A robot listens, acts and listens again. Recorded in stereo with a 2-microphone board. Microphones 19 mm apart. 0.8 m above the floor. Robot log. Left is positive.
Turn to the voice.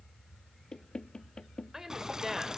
note: The woman speaking: about 25° right or 155° right.
cmd yaw -25
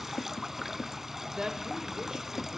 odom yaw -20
note: So it is at 135° right.
cmd yaw -135
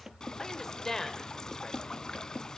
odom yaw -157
note: The woman speaking is now 20° left.
cmd yaw +20
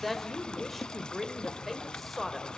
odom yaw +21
end: Facing the woman speaking, 2 to 4 m away.